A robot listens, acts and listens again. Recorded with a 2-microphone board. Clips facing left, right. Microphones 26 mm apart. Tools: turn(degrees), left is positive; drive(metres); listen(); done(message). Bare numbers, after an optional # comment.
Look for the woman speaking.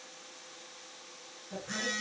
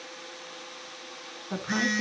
turn(-90)
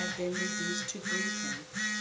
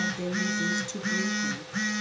done("Facing the woman speaking.")